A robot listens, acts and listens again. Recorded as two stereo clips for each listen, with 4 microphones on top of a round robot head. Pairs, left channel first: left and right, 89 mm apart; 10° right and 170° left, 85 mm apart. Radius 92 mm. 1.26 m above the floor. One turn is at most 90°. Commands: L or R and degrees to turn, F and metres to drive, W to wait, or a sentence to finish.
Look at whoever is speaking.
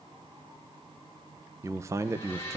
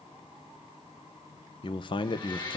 R30
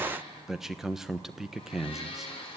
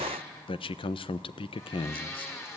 Found it: a man speaking, straight ahead, 1 to 2 m away.